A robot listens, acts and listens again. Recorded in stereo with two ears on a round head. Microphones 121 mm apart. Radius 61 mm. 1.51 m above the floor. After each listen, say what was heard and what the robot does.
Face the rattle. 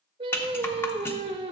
The rattle: about 15° left or 165° left. Turn 15° left.
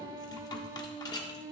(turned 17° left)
So it is at 150° left. Turn 150° left.
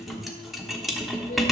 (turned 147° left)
Facing the rattle, 1 to 2 m away.